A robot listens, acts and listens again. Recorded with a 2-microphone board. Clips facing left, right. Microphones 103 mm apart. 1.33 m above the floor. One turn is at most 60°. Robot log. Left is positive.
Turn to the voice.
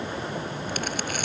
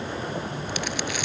cmd idle
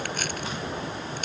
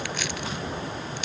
cmd idle
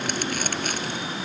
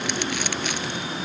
end: I can't make out anyone speaking.